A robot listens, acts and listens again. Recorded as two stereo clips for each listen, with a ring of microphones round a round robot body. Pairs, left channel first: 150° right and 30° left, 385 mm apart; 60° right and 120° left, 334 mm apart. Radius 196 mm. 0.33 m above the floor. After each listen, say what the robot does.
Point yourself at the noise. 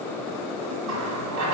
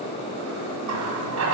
Turn 80° left.
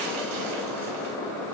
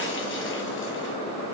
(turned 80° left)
Keep listening.
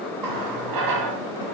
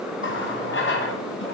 Facing the running tap.